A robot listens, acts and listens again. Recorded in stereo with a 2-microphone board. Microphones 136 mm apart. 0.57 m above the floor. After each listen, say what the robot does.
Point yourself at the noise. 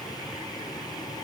Keep listening.
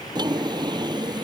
Turn 30° right.
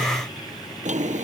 Turn 115° right.
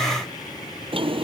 Turn 45° right.
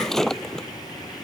Facing the drawer.